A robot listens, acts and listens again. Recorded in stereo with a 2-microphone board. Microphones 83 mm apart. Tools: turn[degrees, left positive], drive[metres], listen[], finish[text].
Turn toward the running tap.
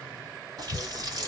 Thought: The running tap: about 50° right or 130° right.
Action: turn[-50]
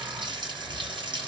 Thought: So it is at 80° right.
Action: turn[-80]
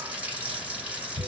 Thought: The running tap is now 15° right.
Action: turn[-15]
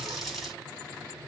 Action: finish[Facing the running tap.]